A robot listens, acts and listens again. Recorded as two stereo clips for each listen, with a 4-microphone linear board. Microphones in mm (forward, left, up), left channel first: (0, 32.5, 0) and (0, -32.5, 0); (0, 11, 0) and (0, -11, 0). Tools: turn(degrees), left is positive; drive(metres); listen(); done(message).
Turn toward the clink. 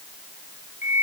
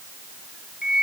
listen()
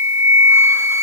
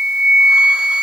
listen()
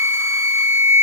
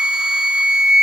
done("I can't make out a clink to turn to.")